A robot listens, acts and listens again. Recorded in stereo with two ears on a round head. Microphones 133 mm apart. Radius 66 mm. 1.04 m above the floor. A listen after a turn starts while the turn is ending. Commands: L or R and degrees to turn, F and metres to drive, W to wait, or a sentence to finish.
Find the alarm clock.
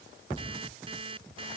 R40
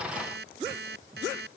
R100
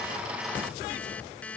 L10
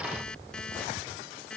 Facing the alarm clock.